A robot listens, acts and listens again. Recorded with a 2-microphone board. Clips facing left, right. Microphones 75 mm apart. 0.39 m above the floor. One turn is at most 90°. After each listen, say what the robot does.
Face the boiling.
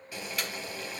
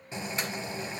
Turn 25° right.
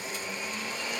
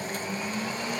Turn 90° right.
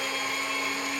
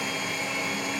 Turn 35° right.
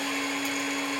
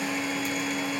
Keep listening.
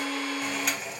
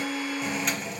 Found it: boiling, straight ahead, 1 to 2 m away.